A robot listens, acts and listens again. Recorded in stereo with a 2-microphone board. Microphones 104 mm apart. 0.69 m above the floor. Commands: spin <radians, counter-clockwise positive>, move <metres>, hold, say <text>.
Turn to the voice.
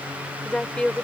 spin 0.52
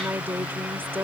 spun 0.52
spin -0.35
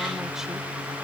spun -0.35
hold
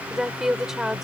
say Facing the woman speaking.